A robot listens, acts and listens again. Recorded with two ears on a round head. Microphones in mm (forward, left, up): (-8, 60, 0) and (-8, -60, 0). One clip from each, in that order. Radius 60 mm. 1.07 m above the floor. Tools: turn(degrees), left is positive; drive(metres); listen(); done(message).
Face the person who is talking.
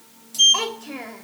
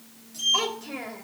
turn(degrees=15)
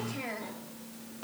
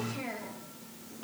turn(degrees=25)
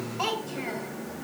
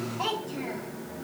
turn(degrees=135)
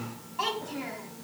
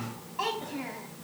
done("Facing the child speaking.")